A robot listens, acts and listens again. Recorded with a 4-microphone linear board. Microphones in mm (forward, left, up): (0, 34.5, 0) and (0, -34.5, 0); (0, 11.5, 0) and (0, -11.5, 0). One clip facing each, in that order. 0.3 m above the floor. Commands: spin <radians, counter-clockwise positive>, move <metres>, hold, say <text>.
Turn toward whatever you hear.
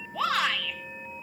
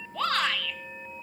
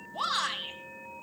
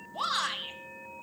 spin 0.52
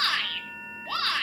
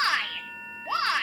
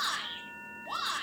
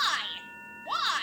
spin -0.44
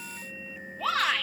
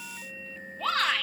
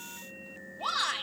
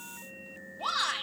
say Found it: a shout, straight ahead, 2 to 4 m away.